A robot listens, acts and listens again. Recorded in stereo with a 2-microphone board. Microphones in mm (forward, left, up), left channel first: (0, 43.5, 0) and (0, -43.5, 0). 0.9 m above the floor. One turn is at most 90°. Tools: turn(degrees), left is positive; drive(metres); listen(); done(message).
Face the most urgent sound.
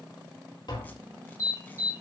turn(degrees=35)
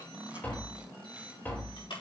turn(degrees=90)
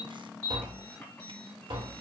turn(degrees=15)
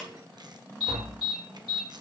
done("Found it: an alarm, straight ahead, over 4 m away.")